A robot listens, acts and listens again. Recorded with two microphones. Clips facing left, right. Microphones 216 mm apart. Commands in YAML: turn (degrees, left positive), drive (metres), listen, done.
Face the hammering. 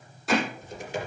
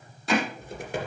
turn: 30
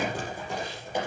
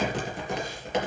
listen: true
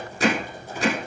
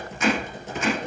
turn: 145
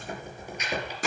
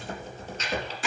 turn: 45
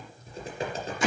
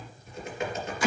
turn: 20
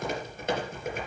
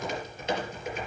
listen: true
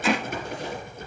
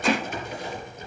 done: "Facing the hammering, over 4 m away."